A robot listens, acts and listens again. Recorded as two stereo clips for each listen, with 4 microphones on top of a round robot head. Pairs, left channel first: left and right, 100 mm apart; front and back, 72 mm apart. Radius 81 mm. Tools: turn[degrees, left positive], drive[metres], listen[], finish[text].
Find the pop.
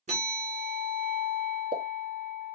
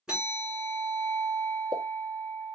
Thought: The pop: 135° right.
Action: turn[-135]
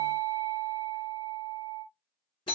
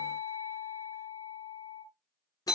Action: finish[I heard a pop from this way, but can't make it out now.]